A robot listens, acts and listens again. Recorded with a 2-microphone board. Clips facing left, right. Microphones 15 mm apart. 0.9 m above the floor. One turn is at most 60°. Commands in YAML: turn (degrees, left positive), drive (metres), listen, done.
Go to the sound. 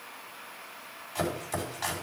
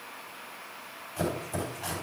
turn: 60
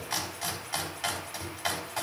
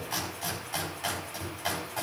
turn: 30
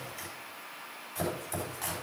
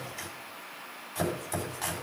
turn: -10
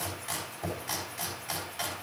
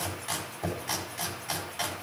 drive: 1.0
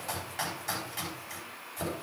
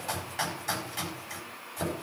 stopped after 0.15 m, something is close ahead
done: "Blocked. The chopping is further on, straight ahead."